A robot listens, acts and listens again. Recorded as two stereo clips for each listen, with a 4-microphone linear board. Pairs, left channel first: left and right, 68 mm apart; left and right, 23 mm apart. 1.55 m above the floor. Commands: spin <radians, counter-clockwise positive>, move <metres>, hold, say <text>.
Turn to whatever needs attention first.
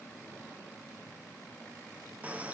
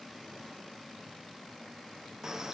hold
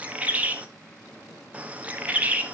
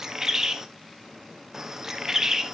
hold
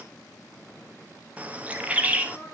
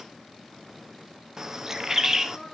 spin 0.61
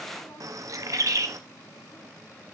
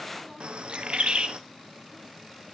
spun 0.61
hold
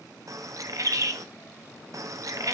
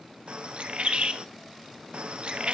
hold
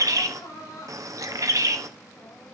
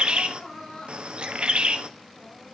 spin 1.92
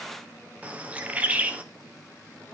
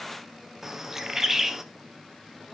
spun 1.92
hold
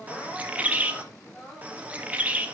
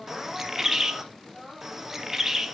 spin 0.17
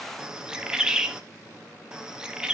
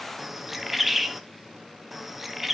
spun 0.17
hold
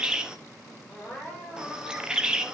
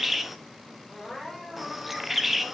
say Facing the crying.